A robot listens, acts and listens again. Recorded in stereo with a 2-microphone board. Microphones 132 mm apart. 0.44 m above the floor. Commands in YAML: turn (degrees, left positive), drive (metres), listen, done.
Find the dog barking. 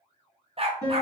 turn: -45
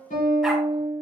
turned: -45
listen: true
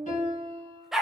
done: "Facing the dog barking, under 1 m away."